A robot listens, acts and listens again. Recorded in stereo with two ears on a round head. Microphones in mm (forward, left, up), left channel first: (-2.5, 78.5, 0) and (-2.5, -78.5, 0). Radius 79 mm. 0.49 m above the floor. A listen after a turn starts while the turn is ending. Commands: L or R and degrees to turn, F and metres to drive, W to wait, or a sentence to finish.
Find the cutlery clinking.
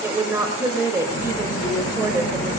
L15
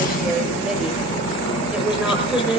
L150
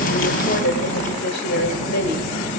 L40
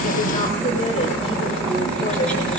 Found it: cutlery clinking, straight ahead.